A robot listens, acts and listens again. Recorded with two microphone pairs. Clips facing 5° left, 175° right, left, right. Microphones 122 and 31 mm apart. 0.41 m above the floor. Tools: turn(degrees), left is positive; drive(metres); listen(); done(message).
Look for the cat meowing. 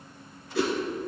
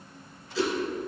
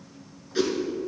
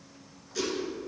listen()
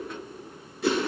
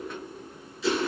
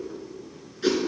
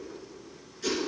listen()
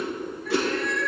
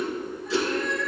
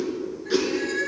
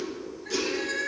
done("Found it: a cat meowing, straight ahead, 1 to 2 m away.")